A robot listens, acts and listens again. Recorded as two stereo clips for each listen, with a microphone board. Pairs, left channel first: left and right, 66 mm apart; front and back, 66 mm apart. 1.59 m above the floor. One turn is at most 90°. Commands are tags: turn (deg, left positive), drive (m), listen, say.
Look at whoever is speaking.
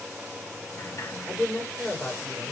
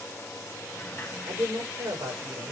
<turn deg="-90"/>
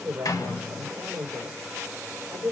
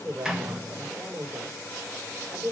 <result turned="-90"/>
<turn deg="-90"/>
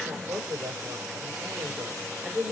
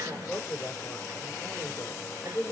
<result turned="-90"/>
<turn deg="-50"/>
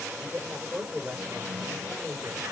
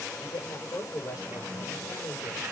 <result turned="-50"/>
<say>Found it: a woman speaking, straight ahead, over 4 m away.</say>